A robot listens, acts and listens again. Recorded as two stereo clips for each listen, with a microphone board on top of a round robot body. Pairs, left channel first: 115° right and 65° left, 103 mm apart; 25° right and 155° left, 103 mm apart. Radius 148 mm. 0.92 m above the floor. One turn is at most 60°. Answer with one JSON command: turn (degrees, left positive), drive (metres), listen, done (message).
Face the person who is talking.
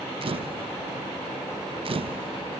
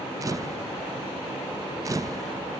{"listen": true}
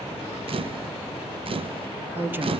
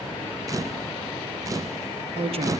{"turn": 60}
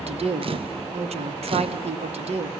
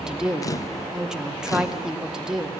{"turn": 60}
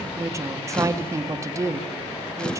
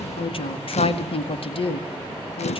{"done": "Facing the woman speaking, 1 to 2 m away."}